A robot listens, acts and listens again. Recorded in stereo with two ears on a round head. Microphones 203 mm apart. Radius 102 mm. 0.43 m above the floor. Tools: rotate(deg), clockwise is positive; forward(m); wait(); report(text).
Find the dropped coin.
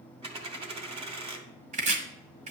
rotate(25)
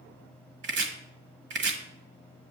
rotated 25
wait()
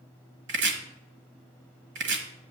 report("I heard a dropped coin, but can't make it out now. It was about straight ahead or 130° right.")